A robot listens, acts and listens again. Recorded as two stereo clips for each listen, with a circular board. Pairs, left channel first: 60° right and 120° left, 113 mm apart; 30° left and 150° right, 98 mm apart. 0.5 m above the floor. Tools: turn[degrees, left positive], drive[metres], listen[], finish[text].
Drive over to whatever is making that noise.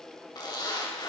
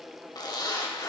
Thought: The zipper: 10° right.
Action: turn[-10]
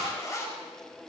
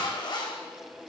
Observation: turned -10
Action: drive[1.0]
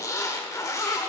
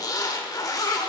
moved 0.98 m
Action: drive[1.0]
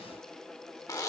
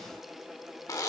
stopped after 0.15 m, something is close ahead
Thought: The zipper is now 10° right.
Action: turn[-10]
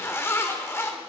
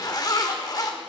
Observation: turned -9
Action: finish[I am next to the zipper.]